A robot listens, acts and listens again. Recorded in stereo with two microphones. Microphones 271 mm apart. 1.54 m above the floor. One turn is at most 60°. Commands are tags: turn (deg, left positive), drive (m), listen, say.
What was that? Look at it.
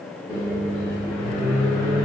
<turn deg="30"/>
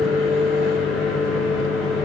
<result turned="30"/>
<say>Found it: a microwave, straight ahead.</say>